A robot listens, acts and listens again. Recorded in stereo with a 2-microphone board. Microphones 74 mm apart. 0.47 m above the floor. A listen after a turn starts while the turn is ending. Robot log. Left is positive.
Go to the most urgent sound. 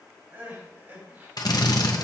note: The crying: about 25° right or 155° right.
cmd yaw -25
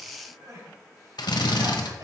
note: So it is at 125° right.
cmd yaw -125
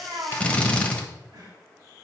cmd idle
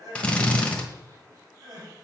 note: The crying is now 55° right.
cmd yaw -55
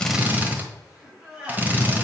note: The crying is now 15° right.
cmd yaw -15
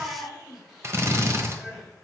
cmd fwd 1.0
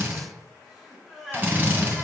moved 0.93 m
cmd fwd 1.0
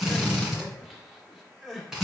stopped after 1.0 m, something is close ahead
end: Arrived at the crying, straight ahead.